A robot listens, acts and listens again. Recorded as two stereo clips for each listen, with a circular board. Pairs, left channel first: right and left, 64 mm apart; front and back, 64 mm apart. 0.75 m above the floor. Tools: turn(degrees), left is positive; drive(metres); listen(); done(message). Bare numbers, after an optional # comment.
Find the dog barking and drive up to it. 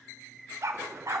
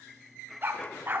# The dog barking: 125° left.
turn(125)
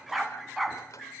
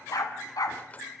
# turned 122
drive(1.0)
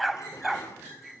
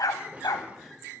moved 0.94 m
drive(1.0)
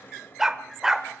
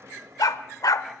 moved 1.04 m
# The dog barking is now 10° left.
turn(10)
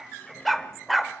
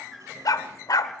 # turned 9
drive(1.0)
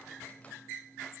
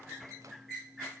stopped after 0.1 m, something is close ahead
listen()
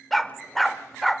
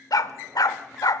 done("Arrived at the dog barking, straight ahead.")